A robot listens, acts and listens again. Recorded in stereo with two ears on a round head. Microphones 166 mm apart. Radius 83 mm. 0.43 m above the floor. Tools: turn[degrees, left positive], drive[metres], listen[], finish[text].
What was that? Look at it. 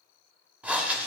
Action: turn[-30]
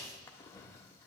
Thought: So it is at 20° left.
Action: turn[20]
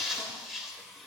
Action: finish[Found it: breathing, straight ahead.]